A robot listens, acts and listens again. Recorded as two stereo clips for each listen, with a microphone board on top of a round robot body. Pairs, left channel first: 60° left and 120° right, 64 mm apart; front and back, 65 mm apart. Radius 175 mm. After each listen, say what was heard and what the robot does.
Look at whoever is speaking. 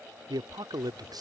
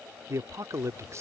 The man speaking: 135° right. Turn 135° right.
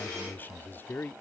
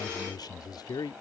Facing the man speaking.